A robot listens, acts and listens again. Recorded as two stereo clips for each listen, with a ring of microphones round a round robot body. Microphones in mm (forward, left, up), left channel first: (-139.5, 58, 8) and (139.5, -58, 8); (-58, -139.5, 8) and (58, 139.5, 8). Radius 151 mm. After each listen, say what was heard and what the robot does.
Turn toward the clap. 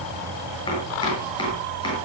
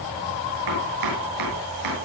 Keep listening.
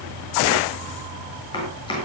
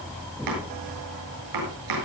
Keep listening.
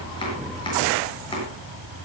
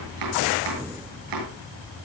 I can't make out a clap, only chopping.